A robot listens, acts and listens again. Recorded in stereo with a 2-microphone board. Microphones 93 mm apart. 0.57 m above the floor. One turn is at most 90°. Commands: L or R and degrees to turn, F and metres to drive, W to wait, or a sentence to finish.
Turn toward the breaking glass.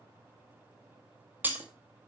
R20
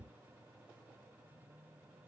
W
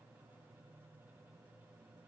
I heard breaking glass, but can't make it out now. It was about straight ahead or 140° right.